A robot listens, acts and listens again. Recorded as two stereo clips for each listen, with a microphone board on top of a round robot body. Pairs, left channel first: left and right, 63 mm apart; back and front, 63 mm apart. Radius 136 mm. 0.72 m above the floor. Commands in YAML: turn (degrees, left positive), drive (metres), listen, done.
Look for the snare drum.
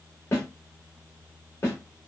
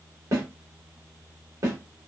turn: 40
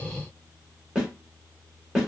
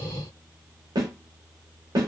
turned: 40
turn: -10
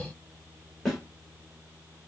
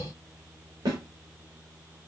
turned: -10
done: "Facing the snare drum, 1 to 2 m away."